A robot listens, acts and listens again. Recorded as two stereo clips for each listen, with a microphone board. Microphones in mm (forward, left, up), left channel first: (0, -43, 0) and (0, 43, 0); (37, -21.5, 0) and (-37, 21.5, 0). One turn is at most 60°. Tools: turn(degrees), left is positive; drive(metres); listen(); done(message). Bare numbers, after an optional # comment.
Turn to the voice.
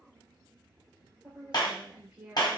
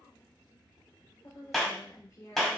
# The woman speaking: 15° left.
turn(15)
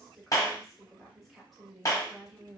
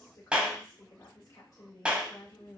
done("Facing the woman speaking.")